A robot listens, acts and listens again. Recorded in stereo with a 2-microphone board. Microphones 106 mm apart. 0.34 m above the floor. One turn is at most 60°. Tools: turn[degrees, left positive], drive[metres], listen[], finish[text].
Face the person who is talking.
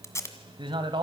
Thought: The man speaking: about 50° right or 130° right.
Action: turn[-50]
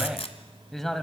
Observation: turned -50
Action: finish[Found it: a man speaking, straight ahead.]